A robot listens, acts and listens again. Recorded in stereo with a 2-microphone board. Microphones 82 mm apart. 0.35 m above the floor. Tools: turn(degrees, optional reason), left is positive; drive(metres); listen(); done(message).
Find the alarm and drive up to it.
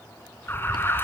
turn(degrees=30, reason="The alarm: about 30° left or 150° left.")
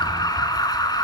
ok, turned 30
turn(degrees=120, reason="So it is at 120° left.")
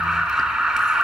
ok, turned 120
turn(degrees=-10, reason="The alarm is now 10° right.")
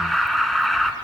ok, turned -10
drive(metres=1.0)
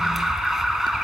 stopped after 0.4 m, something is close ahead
done("Blocked. The alarm is further on, straight ahead.")